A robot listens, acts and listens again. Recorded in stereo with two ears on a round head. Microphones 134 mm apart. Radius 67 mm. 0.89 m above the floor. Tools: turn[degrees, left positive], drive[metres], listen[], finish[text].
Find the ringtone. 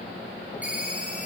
Action: turn[-30]
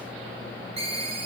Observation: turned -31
Thought: So it is at 140° right.
Action: turn[-140]
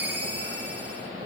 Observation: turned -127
Thought: The ringtone is now 15° right.
Action: turn[-15]
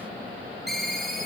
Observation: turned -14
Action: finish[Facing the ringtone, 2 to 4 m away.]